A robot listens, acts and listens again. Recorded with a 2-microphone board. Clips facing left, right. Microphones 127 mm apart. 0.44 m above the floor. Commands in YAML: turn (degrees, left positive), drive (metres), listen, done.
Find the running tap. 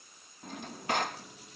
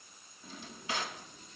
turn: 90
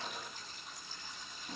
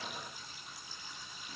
turn: -10
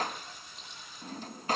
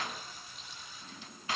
done: "Facing the running tap, over 4 m away."